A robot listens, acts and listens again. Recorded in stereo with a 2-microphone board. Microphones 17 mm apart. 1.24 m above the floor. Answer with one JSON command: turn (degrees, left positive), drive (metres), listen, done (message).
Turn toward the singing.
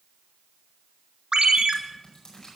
{"listen": true}
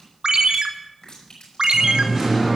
{"turn": -30}
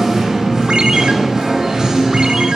{"turn": -140}
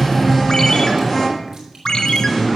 {"done": "Found it: singing, straight ahead, over 4 m away."}